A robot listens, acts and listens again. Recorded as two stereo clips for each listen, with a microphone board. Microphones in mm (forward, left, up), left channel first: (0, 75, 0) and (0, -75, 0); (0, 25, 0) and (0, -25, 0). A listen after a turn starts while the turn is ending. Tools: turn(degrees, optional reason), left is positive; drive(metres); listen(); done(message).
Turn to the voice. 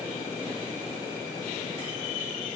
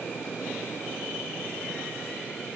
listen()
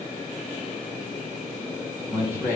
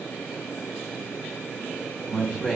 turn(degrees=-30)
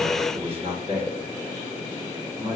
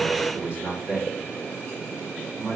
turn(degrees=-135, reason="So it is at 135° right.")
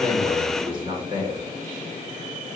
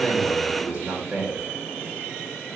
turn(degrees=-40, reason="The man speaking is now 40° right.")
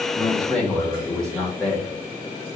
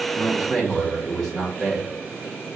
done("Found it: a man speaking, straight ahead, 1 to 2 m away.")